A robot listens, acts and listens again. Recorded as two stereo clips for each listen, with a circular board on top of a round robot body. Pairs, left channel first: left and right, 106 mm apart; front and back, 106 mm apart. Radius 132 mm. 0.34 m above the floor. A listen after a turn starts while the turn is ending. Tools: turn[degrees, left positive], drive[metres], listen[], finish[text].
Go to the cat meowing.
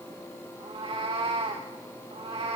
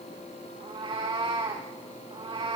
Thought: The cat meowing: 135° right.
Action: turn[-135]
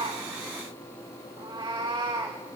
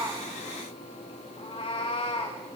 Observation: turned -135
Thought: The cat meowing is now 35° right.
Action: turn[-35]
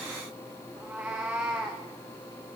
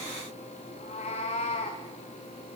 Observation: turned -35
Thought: The cat meowing is now 10° right.
Action: turn[-10]
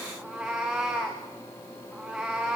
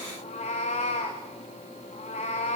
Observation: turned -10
Action: drive[1.0]
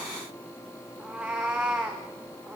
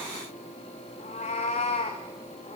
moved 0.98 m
Thought: The cat meowing is now 10° right.
Action: turn[-10]
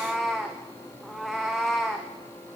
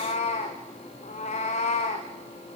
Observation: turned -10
Action: drive[1.0]
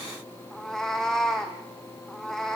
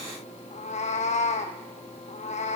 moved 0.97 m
Action: drive[1.0]
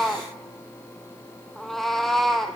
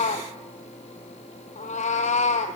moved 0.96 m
Action: drive[1.0]
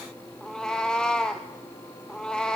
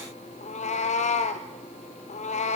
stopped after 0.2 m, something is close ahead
Action: finish[I am next to the cat meowing.]